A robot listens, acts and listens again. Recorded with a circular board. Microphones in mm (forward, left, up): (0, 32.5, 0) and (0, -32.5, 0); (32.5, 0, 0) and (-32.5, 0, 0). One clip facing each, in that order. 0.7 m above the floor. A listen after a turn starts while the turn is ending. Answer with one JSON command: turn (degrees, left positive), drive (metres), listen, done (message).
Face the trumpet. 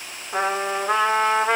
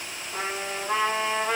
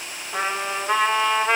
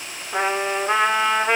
{"turn": 105}
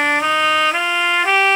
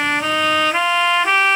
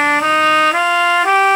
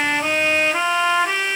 {"turn": 10}
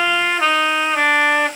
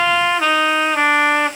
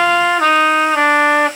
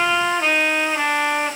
{"done": "Facing the trumpet."}